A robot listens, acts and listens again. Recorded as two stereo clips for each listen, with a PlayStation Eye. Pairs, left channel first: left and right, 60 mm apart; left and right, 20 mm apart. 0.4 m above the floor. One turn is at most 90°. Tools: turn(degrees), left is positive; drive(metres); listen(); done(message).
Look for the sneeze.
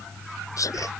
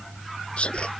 turn(degrees=65)
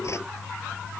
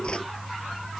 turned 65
listen()
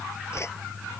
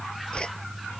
done("I heard a sneeze, but can't make it out now. It was about straight ahead or 50° left.")